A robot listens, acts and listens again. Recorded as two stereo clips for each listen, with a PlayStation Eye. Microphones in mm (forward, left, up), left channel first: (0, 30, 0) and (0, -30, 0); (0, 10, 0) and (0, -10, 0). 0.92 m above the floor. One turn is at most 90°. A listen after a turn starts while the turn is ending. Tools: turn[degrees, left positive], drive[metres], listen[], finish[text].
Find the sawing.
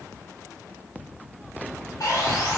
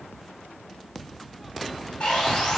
Thought: The sawing: about 70° left or 110° left.
Action: turn[70]
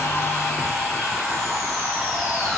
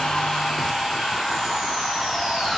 Action: finish[Found it: sawing, straight ahead.]